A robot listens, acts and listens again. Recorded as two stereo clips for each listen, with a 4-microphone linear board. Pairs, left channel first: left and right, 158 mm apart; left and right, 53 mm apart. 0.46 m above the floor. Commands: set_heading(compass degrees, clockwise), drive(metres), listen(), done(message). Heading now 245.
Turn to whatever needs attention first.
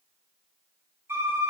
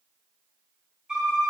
listen()
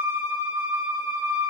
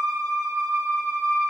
listen()
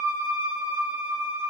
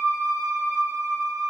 done("I can't make out anything urgent to turn to.")